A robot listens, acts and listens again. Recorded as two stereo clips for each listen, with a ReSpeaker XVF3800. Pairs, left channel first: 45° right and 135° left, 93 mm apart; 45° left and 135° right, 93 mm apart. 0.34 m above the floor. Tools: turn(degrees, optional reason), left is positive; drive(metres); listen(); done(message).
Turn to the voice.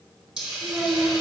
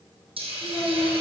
turn(degrees=70, reason="The child speaking: 70° left.")
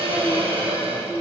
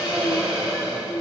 done("Found it: a child speaking, straight ahead.")